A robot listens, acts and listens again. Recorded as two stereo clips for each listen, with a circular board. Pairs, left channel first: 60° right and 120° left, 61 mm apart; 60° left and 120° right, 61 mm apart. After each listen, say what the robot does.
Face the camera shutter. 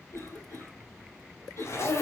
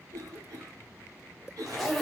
Keep listening.
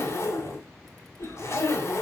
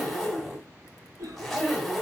Keep listening.
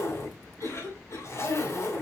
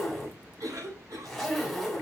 I can't make out a camera shutter to turn to.